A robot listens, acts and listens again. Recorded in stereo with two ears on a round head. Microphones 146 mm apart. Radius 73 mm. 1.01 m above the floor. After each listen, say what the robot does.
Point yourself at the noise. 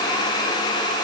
Keep listening.
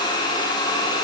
Keep listening.
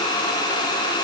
I can't make out anything.